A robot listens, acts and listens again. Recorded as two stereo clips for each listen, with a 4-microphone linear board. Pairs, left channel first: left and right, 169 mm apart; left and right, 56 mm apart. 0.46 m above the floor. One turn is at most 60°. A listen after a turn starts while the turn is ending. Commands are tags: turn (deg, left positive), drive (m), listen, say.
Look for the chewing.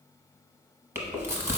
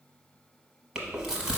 <turn deg="-30"/>
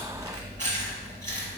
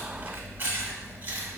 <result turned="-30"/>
<turn deg="-60"/>
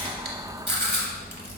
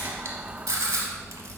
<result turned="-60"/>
<turn deg="-60"/>
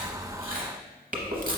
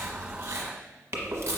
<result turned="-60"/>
<turn deg="-60"/>
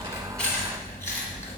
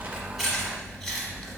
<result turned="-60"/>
<turn deg="10"/>
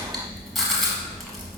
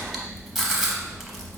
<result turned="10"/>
<say>Found it: chewing, straight ahead.</say>